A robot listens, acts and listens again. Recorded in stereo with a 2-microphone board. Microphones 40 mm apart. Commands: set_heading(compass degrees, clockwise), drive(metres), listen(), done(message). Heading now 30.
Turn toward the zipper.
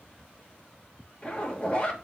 set_heading(0)
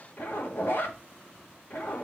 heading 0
set_heading(235)
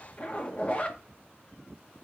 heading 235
set_heading(205)
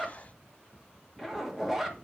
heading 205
done("Found it: a zipper, straight ahead.")